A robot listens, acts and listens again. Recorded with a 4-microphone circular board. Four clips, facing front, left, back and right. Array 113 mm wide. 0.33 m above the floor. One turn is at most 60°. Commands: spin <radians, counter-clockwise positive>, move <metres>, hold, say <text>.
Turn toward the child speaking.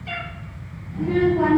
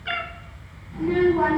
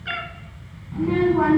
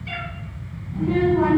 spin 1.05
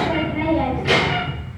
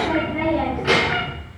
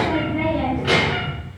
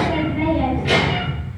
spin 1.05
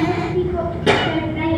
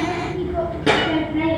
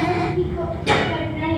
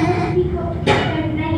spin 1.05
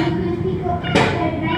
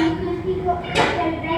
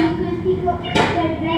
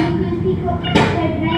spin -0.26
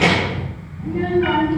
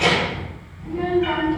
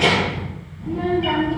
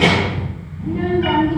say Facing the child speaking.